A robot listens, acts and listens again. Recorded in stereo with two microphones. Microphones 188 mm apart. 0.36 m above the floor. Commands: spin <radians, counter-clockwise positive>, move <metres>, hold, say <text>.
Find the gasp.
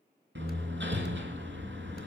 hold
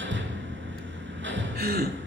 spin -0.87
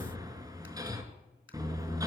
hold
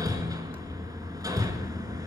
say I heard a gasp, but can't make it out now. It was about straight ahead or 80° right.